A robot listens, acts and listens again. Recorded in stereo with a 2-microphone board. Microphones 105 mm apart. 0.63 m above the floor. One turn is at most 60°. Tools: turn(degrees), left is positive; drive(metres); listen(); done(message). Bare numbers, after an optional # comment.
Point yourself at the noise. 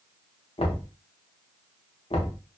# The knocking: about 70° left or 110° left.
turn(60)
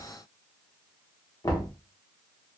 # So it is at 35° left.
turn(35)
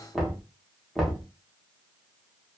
done("Found it: knocking, straight ahead.")